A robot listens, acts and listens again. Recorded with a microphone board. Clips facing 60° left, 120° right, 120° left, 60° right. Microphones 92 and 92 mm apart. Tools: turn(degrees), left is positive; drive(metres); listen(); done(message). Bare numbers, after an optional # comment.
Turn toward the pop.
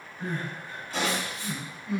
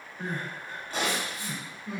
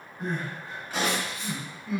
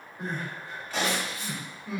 # The pop: 160° right.
turn(-160)
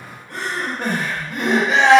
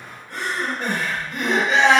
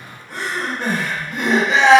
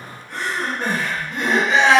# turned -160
done("I heard a pop from this way, but can't make it out now.")